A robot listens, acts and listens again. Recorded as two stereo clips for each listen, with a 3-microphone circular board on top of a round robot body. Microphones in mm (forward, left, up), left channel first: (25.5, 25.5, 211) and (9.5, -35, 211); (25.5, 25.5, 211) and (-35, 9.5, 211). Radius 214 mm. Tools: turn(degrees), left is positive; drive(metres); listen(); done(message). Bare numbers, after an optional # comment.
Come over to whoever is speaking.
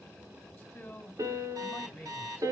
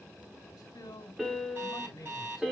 drive(1.0)
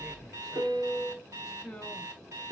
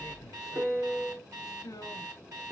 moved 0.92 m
# The man speaking is now 10° right.
turn(-10)
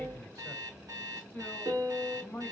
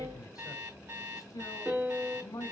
drive(1.0)
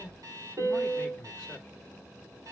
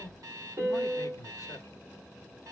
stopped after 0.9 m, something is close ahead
done("I am next to the man speaking.")